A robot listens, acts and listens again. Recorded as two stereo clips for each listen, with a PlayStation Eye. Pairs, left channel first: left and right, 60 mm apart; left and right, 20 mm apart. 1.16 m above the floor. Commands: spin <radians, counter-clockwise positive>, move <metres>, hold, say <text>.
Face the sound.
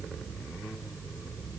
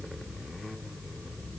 hold
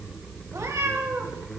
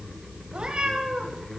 spin -0.96
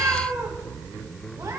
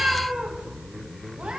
spin -1.31
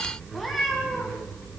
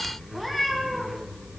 say Found it: a cat meowing, straight ahead, 2 to 4 m away.